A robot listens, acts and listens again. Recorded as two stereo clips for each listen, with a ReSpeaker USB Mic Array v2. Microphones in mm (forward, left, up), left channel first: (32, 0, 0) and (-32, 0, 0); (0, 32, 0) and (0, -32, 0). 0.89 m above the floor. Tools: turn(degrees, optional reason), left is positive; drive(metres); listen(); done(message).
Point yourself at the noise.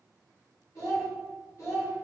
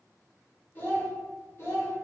turn(degrees=40, reason="The child speaking: 40° left.")
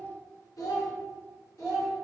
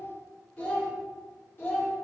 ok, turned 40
turn(degrees=40, reason="The child speaking is now 40° left.")
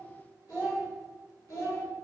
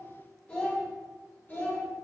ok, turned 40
turn(degrees=25, reason="The child speaking is now 25° left.")
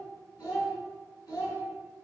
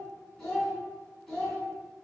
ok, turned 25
done("Facing the child speaking.")